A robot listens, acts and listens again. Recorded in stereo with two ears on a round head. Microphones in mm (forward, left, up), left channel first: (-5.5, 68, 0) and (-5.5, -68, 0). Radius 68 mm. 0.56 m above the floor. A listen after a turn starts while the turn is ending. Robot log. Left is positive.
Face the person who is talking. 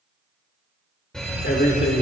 note: The man speaking: about 55° left or 125° left.
cmd yaw +55
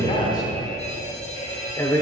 note: So it is at 25° left.
cmd yaw +25
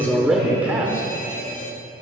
note: The man speaking is now 15° right.
cmd yaw -15
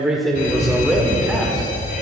end: Facing the man speaking, 1 to 2 m away.